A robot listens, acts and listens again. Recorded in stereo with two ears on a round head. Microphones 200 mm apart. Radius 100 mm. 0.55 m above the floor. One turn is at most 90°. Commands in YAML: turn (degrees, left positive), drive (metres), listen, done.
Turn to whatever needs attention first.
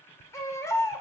turn: 30
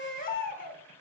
turn: 90
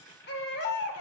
turn: 55
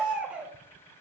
done: "Facing the baby crying, under 1 m away."